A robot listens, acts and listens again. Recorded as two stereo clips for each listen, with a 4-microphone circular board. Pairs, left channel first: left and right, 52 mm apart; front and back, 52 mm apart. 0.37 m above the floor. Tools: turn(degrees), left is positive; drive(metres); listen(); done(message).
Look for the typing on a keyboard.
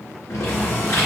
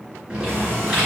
turn(degrees=105)
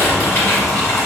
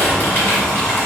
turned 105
turn(degrees=45)
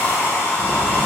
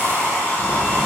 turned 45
listen()
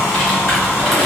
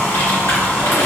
done("Facing the typing on a keyboard, 1 to 2 m away.")